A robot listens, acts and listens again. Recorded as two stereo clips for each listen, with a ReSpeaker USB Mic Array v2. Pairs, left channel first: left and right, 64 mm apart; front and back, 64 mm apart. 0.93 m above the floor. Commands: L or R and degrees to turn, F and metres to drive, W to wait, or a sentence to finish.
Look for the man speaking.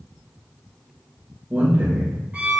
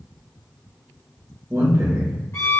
R145
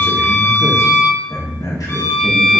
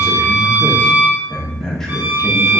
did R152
L85
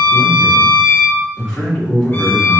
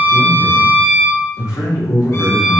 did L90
L15
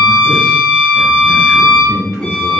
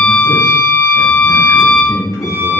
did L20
Found it: a man speaking, straight ahead.